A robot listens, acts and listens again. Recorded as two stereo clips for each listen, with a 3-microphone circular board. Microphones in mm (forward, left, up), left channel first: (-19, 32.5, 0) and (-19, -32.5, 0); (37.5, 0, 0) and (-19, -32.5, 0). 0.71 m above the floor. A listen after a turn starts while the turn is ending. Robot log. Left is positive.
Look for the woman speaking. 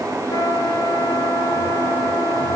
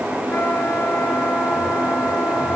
cmd idle
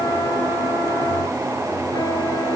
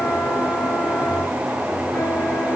cmd idle
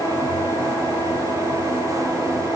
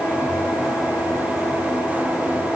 end: I can't make out a woman speaking.